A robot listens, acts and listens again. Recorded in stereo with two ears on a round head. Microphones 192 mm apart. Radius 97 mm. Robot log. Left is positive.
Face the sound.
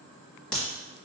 cmd yaw +30
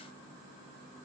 cmd idle
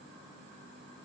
end: I heard a crack, but can't make it out now. It was about 25° right or 145° left.